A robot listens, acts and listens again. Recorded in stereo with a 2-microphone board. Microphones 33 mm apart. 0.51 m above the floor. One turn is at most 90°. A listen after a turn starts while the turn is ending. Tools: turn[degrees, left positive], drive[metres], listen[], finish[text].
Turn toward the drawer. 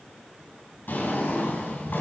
Action: turn[90]
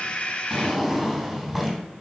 Action: finish[Facing the drawer, 2 to 4 m away.]